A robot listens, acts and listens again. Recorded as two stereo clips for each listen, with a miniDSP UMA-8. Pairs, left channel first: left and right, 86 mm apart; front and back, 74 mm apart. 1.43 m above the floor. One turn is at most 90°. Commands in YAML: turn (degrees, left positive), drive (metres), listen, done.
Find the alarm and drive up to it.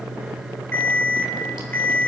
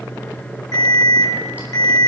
turn: 25
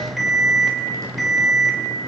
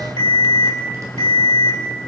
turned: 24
drive: 1.0
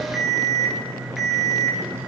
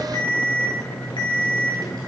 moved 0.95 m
drive: 1.0
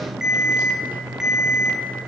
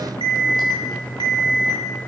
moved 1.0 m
drive: 1.0
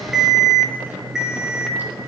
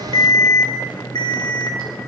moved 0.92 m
drive: 1.0
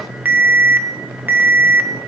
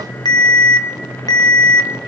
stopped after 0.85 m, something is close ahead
turn: -20
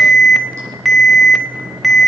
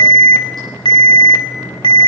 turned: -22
done: "I am next to the alarm."